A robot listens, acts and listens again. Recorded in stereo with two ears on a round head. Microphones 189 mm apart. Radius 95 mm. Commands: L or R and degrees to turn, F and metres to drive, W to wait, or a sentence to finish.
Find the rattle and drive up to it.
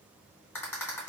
L30
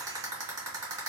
R20
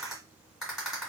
F1.0
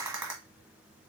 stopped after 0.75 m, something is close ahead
R10
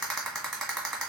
Arrived at the rattle, straight ahead.